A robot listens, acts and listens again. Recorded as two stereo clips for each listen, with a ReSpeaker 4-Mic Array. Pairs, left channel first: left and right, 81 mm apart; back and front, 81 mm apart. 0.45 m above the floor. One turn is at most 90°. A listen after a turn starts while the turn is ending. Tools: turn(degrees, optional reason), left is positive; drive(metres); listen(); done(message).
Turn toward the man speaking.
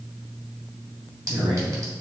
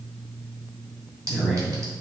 turn(degrees=-80, reason="The man speaking: 80° right.")
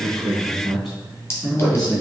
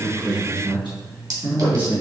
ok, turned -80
done("Found it: a man speaking, straight ahead.")